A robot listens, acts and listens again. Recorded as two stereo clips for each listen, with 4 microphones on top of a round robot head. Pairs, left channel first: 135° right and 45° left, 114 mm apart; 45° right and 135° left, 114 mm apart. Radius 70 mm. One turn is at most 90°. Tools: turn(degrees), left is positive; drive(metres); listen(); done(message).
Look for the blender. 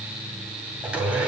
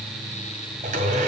turn(degrees=90)
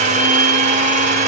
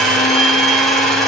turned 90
turn(degrees=40)
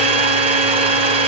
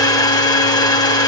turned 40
turn(degrees=10)
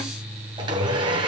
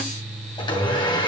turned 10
done("Facing the blender, 2 to 4 m away.")